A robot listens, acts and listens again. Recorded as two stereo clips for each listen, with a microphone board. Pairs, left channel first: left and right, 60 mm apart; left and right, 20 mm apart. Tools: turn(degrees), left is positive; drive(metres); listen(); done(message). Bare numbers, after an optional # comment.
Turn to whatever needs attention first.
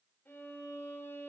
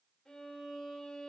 listen()
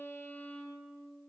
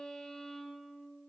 listen()
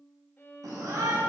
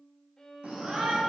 turn(-90)
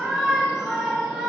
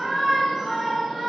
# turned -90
# So it is at 10° right.
turn(-10)
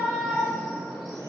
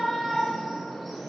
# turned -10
done("Found it: a shout, straight ahead, 2 to 4 m away.")